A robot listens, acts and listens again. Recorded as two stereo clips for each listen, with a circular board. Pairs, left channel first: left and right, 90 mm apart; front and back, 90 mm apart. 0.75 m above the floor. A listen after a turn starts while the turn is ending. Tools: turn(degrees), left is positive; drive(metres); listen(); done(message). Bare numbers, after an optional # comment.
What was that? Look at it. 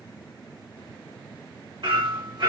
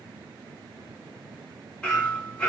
# The hammering: 75° right.
turn(-75)
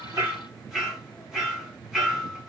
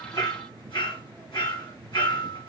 done("Found it: hammering, straight ahead.")